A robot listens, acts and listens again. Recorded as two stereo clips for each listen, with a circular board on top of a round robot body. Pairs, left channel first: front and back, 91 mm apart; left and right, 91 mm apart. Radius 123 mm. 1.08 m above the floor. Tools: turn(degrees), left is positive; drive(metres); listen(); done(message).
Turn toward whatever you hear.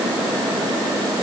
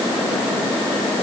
listen()
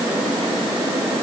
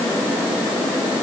listen()
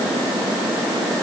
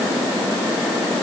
done("I can't make out anything to turn to.")